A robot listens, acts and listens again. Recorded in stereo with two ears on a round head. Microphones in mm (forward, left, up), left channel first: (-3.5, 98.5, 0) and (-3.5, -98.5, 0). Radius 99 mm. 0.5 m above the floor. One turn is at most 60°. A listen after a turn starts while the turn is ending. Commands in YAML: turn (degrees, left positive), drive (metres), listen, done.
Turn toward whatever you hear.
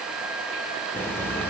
turn: 30
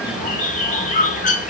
turn: 60
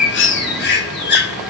turn: 60
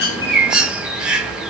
done: "Found it: a bird, straight ahead, under 1 m away."